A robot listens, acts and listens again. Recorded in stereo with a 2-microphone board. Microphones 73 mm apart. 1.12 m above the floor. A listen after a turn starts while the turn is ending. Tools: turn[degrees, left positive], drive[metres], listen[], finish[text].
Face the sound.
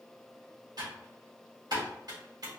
Thought: The typing on a keyboard: about 65° right or 115° right.
Action: turn[-65]
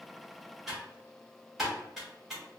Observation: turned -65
Action: finish[Facing the typing on a keyboard, 1 to 2 m away.]